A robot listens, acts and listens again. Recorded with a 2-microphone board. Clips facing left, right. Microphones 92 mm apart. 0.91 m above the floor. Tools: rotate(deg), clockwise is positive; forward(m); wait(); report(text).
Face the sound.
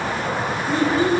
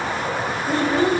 rotate(65)
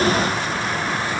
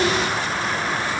wait()
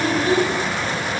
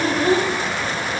rotate(50)
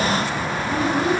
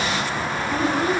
report("Facing the child speaking.")